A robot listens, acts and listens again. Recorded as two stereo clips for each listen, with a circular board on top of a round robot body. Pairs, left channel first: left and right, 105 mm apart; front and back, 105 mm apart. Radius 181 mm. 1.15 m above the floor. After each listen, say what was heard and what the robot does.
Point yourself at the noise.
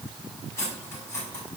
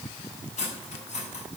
The cutlery clinking: 20° left. Turn 20° left.
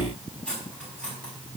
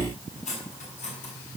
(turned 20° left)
The cutlery clinking is now 10° left. Turn 10° left.
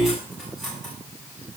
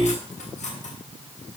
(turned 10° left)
Facing the cutlery clinking, over 4 m away.